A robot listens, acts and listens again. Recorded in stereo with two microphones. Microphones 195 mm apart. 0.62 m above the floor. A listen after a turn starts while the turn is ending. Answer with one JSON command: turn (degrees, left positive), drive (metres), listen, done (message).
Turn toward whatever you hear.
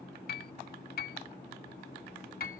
{"turn": 55}
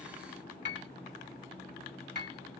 {"turn": 70}
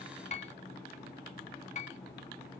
{"turn": 40}
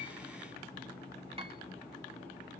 {"listen": true}
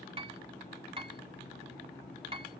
{"turn": -30}
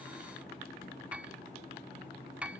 {"done": "Found it: a piano, straight ahead."}